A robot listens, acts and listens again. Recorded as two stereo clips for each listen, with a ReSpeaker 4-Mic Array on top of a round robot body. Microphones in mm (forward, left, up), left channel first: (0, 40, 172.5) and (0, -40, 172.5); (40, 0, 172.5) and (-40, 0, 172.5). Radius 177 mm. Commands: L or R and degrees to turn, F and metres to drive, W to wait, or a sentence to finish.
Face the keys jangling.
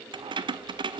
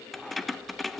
R90
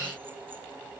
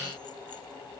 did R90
W
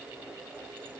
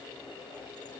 W
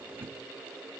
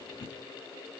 R25
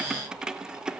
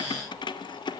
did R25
R10
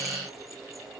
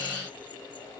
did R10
W
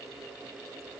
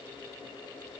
W
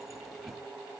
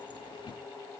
I heard keys jangling from this way, but can't make it out now.